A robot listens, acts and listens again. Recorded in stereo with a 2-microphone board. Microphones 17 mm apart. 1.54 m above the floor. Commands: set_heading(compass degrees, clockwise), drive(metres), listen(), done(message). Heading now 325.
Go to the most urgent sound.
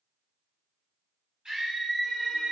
set_heading(25)
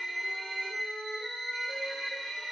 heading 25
drive(1.0)
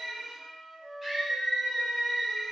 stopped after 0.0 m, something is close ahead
set_heading(35)
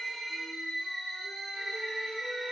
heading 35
done("Something is in my way. I am facing the scream but have not reached it.")